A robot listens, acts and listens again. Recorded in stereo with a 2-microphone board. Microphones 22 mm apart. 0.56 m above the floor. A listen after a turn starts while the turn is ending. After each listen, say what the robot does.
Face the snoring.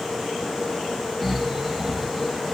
Turn 30° left.
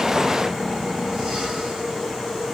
Keep listening.
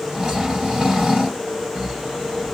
Turn 30° right.
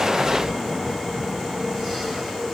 Keep listening.
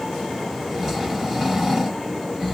Found it: snoring, straight ahead.